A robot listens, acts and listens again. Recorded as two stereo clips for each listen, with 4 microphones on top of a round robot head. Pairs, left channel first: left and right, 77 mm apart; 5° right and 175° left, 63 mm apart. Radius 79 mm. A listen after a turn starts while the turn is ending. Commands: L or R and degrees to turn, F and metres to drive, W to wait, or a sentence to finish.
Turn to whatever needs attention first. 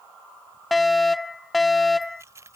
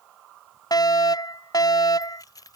Facing the fire alarm.